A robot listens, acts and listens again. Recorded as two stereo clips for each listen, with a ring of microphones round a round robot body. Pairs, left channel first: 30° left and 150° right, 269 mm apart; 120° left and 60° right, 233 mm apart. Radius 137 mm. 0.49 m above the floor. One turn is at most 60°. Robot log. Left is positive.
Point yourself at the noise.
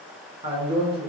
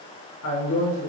note: The man speaking: 140° left.
cmd yaw +60
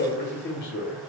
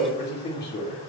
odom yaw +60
note: The man speaking is now 80° left.
cmd yaw +60
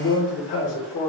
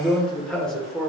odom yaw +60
note: The man speaking is now 35° left.
cmd yaw +35
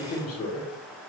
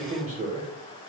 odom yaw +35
end: Facing the man speaking.